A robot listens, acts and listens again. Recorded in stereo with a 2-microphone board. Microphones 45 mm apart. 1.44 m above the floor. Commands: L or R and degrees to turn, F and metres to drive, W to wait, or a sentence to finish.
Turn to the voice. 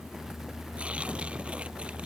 W
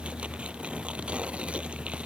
W
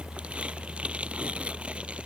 I can't make out anyone speaking to turn to.